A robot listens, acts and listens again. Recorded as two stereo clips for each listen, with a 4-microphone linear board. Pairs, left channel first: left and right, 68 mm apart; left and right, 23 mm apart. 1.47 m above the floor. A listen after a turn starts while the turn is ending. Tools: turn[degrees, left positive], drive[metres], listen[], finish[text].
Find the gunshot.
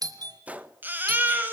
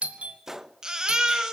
Thought: The gunshot: about 20° right or 160° right.
Action: turn[-20]
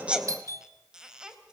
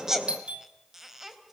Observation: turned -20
Action: listen[]
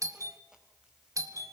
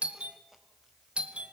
Action: finish[I heard a gunshot, but can't make it out now. It was about straight ahead or 140° right.]